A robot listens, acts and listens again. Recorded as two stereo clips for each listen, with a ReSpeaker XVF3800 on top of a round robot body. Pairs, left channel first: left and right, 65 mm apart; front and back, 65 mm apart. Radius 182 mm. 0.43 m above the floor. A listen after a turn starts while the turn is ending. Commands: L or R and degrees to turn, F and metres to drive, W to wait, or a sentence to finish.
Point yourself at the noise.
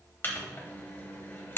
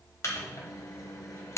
L40
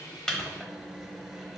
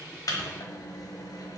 W
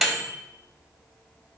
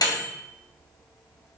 Facing the microwave.